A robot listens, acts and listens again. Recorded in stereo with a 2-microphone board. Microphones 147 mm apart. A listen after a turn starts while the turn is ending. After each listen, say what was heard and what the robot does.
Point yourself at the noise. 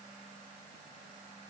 Keep listening.
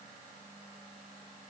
Keep listening.
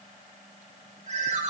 The ringtone: about 50° right or 130° right. Turn 50° right.
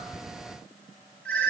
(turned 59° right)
So it is at 10° left. Turn 10° left.
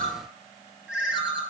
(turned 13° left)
Found it: a ringtone, straight ahead.